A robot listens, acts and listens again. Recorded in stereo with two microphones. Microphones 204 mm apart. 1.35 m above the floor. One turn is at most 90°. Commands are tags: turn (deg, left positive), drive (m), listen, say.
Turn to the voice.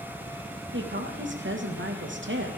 <turn deg="-90"/>
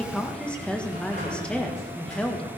<say>Found it: a woman speaking, straight ahead.</say>